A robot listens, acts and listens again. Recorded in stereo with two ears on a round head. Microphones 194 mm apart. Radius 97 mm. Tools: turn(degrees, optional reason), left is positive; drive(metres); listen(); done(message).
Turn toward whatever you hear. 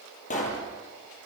turn(degrees=35, reason="The pop: about 35° left or 145° left.")
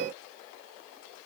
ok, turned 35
listen()
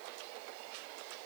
done("I heard a pop, but can't make it out now. It was about straight ahead or 110° left.")